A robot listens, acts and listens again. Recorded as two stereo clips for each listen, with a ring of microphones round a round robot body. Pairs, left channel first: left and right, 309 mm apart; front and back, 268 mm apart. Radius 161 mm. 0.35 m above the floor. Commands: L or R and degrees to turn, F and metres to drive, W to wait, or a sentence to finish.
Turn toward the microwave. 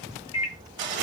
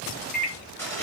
L55
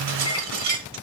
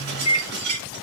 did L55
L15
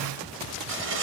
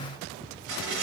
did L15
W
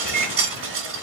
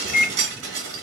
Facing the microwave, 1 to 2 m away.